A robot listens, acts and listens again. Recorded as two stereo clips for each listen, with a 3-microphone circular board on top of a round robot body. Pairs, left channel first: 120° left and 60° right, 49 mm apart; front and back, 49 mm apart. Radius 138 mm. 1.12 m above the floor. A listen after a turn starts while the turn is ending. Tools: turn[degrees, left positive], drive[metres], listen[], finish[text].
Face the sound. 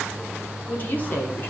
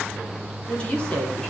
Thought: The woman speaking: 70° left.
Action: turn[70]
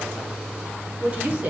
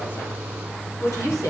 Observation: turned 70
Action: finish[Facing the woman speaking, 2 to 4 m away.]